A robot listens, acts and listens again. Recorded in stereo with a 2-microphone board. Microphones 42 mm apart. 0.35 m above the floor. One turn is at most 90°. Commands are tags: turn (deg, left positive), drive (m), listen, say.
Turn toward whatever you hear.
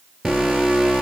<turn deg="-30"/>
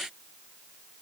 <listen/>
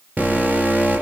<turn deg="-90"/>
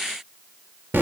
<turn deg="-65"/>
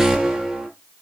<turn deg="-20"/>
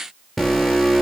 <say>Found it: an alarm, straight ahead.</say>